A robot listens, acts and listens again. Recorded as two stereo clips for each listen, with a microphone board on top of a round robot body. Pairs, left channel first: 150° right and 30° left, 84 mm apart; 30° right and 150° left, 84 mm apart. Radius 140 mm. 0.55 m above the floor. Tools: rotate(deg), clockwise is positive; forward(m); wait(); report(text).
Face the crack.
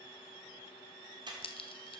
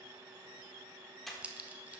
rotate(135)
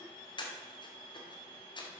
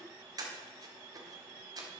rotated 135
report("Facing where the crack came from. I can't hear it now.")